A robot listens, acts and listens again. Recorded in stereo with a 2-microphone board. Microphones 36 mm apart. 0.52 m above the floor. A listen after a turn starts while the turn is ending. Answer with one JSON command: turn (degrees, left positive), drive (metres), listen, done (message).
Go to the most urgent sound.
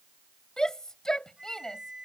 {"turn": 20}
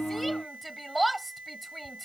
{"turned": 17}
{"drive": 1.0}
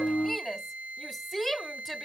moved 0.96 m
{"turn": 10}
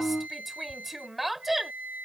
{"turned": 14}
{"drive": 1.0}
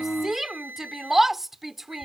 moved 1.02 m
{"turn": -10}
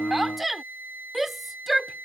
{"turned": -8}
{"drive": 1.0}
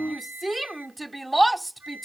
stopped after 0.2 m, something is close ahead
{"done": "I am next to the shout."}